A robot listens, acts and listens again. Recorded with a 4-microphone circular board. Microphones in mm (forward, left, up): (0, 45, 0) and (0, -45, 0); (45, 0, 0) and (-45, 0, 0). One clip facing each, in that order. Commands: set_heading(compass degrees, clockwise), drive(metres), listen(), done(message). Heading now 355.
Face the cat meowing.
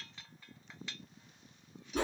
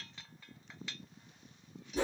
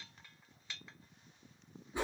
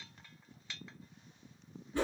listen()
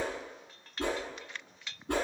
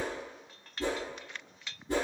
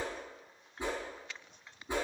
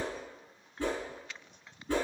listen()
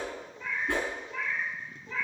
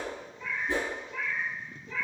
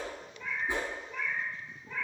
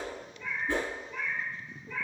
set_heading(305)
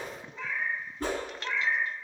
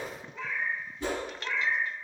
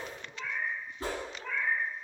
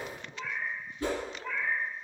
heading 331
set_heading(301)
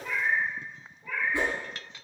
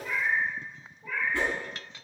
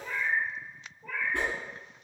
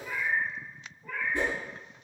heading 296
done("Facing the cat meowing.")